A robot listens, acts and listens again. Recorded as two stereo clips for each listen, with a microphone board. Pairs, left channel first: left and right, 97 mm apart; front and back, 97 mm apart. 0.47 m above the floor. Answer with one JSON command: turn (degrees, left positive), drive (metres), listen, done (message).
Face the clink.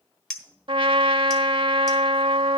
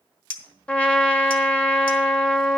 {"turn": 10}
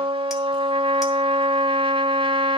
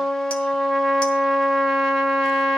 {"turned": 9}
{"listen": true}
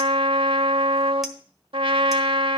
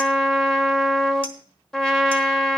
{"listen": true}
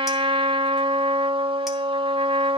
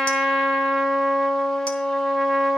{"done": "I heard a clink from this way, but can't make it out now."}